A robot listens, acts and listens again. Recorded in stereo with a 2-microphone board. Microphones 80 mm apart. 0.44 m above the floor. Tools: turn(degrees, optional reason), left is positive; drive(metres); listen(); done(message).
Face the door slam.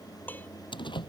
turn(degrees=90)
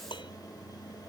done("I heard a door slam from this way, but can't make it out now.")